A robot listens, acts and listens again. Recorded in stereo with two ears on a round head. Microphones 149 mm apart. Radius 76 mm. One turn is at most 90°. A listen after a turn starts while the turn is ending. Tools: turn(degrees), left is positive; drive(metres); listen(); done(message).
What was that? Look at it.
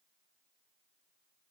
listen()
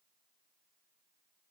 listen()
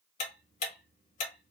turn(degrees=45)
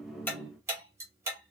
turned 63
turn(degrees=-15)
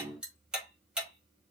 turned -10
done("Found it: ticking, straight ahead.")